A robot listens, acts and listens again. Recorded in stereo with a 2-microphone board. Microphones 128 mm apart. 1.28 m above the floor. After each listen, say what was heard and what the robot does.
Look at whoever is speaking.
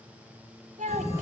Turn 90° right.
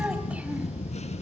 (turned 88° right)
Keep listening.
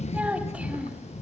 Keep listening.
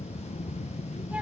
Facing where the child speaking came from. I can't hear it now.